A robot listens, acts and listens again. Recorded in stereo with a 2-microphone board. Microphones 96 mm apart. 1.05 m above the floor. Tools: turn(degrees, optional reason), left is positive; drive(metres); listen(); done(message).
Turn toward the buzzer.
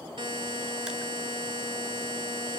turn(degrees=-60, reason="The buzzer: about 60° right or 120° right.")
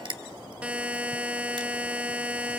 turn(degrees=-15, reason="So it is at 15° right.")
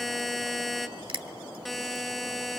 done("Found it: a buzzer, straight ahead, 1 to 2 m away.")